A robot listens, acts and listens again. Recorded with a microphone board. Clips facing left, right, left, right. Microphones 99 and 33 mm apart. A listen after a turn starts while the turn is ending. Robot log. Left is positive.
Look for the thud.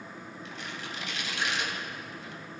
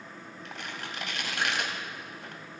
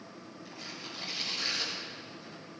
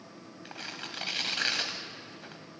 cmd idle
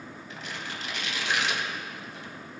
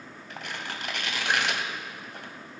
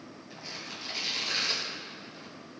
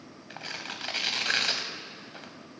cmd idle
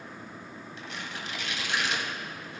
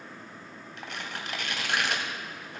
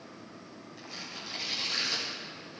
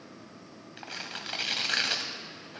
end: I can't make out a thud, only tearing paper.